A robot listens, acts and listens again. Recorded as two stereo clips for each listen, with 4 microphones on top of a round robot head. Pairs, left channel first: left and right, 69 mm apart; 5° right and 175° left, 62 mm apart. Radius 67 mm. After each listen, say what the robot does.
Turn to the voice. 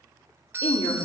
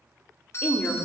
Turn 55° left.
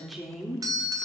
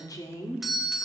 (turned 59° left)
Found it: a woman speaking, straight ahead, 2 to 4 m away.